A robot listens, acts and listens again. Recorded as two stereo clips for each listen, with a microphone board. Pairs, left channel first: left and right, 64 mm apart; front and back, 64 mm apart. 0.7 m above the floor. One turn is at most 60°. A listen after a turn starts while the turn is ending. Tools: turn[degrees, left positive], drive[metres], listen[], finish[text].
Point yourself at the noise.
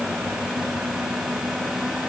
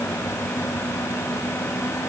Action: listen[]
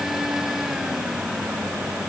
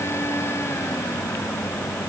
Action: listen[]
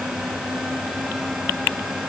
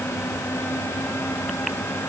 Action: finish[I can't make out anything to turn to.]